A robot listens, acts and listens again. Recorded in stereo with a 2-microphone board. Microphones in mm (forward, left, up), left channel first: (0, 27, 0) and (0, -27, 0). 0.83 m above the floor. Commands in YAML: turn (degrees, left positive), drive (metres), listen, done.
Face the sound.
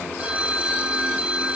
turn: -20
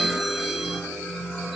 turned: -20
listen: true
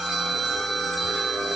done: "Found it: a phone ringing, straight ahead, 1 to 2 m away."